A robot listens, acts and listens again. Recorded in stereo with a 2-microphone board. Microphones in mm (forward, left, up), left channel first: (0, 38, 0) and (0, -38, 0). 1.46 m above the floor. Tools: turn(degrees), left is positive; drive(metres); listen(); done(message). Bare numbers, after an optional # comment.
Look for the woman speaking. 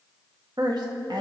turn(-90)
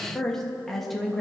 done("Found it: a woman speaking, straight ahead.")